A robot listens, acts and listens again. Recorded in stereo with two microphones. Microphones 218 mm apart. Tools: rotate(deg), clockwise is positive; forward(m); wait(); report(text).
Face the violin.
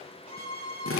rotate(-30)
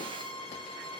rotate(20)
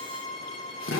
report("Facing the violin, 2 to 4 m away.")